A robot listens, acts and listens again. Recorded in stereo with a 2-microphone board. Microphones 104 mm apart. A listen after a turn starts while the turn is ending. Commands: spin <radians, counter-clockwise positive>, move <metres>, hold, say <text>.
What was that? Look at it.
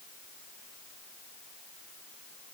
hold
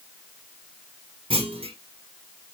spin -1.13
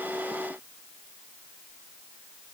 hold
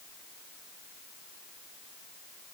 say I heard a clunk, but can't make it out now. It was about straight ahead or 50° right.